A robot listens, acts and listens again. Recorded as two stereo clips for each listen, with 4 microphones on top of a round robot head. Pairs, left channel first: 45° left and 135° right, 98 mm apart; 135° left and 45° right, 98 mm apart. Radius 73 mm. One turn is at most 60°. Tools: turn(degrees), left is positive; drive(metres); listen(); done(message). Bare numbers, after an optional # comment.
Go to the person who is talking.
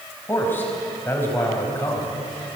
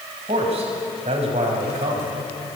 # The man speaking: 25° right.
turn(-25)
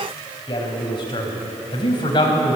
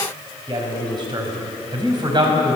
drive(1.0)
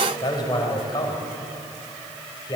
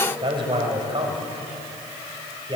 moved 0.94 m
drive(1.0)
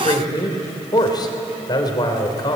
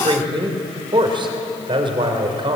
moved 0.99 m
drive(1.0)
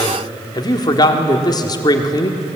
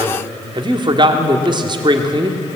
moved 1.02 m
drive(1.0)
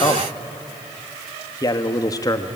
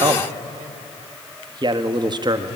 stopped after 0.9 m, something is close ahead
done("Arrived at the man speaking, straight ahead.")